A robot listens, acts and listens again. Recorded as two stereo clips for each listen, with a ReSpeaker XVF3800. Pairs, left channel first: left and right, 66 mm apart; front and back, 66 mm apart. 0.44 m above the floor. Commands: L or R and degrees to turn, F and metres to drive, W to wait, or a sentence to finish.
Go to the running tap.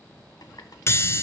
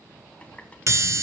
L70
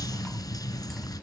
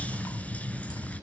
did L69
W
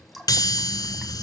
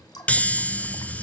F1.0
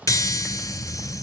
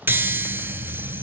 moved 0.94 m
W
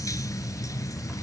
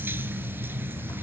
W
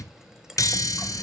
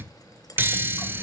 R10
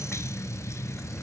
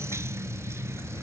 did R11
W
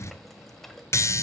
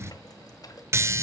F1.0
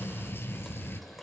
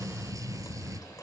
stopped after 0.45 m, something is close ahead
W
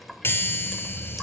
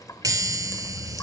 I am next to the running tap.